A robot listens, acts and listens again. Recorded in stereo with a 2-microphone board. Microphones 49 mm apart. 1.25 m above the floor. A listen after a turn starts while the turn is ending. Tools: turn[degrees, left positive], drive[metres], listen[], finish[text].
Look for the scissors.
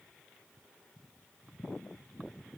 Action: listen[]
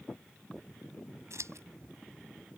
Thought: The scissors: about 75° right or 105° right.
Action: turn[-75]
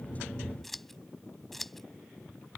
Action: finish[Found it: scissors, straight ahead.]